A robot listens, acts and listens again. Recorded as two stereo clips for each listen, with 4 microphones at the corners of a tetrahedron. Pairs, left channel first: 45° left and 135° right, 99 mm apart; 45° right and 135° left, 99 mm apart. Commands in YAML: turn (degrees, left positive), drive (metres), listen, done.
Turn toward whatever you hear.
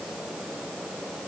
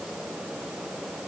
listen: true
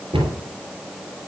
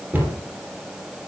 turn: -155
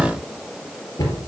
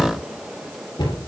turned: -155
done: "Found it: a cupboard door, straight ahead."